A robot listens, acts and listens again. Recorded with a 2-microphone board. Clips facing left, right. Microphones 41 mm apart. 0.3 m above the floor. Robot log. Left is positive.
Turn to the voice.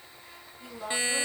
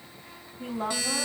note: The woman speaking: about 40° right or 140° right.
cmd yaw -40
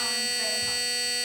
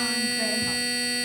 cmd idle
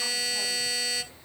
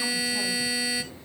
cmd idle
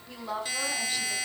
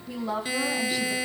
end: Found it: a woman speaking, straight ahead, 1 to 2 m away.